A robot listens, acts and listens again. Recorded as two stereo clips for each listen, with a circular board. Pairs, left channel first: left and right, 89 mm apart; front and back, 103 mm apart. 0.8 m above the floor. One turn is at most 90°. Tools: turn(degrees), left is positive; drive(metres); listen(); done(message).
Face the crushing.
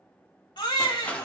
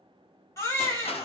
turn(degrees=15)
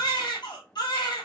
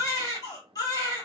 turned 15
listen()
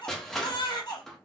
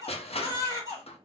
done("Facing the crushing, under 1 m away.")